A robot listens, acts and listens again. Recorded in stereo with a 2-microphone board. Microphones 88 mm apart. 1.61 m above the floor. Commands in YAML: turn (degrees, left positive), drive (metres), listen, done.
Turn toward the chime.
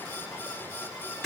listen: true
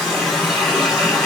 listen: true
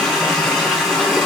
done: "I can't make out a chime, only a running tap."